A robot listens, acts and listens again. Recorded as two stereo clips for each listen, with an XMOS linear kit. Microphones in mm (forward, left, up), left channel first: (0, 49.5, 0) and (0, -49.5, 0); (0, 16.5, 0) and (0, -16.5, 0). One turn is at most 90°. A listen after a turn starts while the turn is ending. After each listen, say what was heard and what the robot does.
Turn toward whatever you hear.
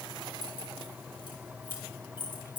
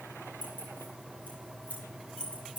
The keys jangling: about 60° left or 120° left. Turn 60° left.
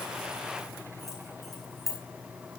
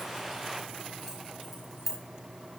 Facing the keys jangling.